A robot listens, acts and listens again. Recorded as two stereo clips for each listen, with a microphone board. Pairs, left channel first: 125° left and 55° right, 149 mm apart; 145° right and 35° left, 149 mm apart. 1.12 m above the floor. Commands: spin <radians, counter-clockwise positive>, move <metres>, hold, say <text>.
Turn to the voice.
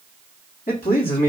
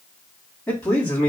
spin 2.44
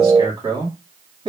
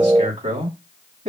say Found it: a man speaking, straight ahead.